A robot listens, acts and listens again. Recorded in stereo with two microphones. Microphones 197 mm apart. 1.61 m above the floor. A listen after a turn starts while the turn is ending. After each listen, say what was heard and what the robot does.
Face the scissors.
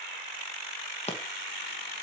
The scissors: about 35° left or 145° left. Turn 35° left.
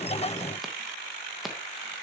Keep listening.
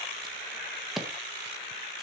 Found it: scissors, straight ahead.